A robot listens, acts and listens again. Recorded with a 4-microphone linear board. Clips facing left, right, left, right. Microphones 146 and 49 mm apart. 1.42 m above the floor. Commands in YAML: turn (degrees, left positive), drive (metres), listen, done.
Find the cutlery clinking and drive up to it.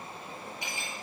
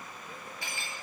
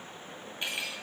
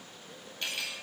turn: 20
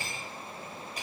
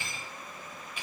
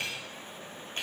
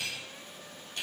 turn: 140
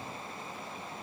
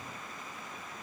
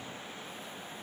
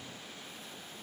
listen: true
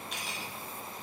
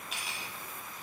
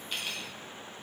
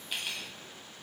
drive: 1.0
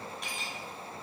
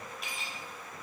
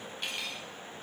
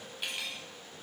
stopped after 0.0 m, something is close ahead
done: "Something is in my way. I am facing the cutlery clinking but have not reached it."